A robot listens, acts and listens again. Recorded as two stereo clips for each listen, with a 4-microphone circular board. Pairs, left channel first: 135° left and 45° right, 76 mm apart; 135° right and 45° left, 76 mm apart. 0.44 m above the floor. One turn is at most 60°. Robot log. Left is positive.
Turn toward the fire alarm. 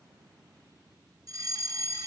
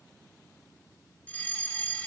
note: The fire alarm: 65° right.
cmd yaw -60
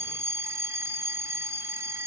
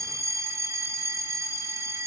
end: Facing the fire alarm, 2 to 4 m away.